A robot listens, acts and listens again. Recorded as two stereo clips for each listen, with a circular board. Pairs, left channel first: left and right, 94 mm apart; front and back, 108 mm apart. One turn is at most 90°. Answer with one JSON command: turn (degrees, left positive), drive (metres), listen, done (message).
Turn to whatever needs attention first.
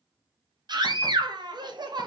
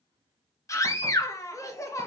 {"turn": -60}
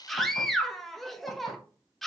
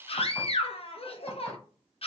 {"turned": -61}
{"done": "Facing the scream."}